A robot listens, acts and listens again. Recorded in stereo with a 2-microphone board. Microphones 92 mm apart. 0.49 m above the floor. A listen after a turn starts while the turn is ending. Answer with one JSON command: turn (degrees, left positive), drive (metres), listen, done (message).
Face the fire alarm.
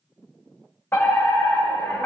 {"turn": 25}
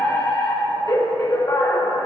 {"turn": 120}
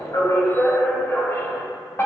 {"turn": 35}
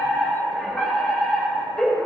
{"turn": 10}
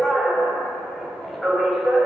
{"done": "Found it: a fire alarm, straight ahead."}